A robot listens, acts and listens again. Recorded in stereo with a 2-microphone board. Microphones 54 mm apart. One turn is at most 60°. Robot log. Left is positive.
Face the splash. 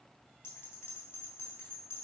cmd idle
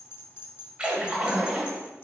note: The splash: about 20° right or 160° right.
cmd yaw -20
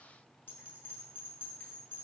cmd idle
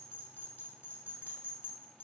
end: I heard a splash, but can't make it out now. It was about straight ahead or 140° right.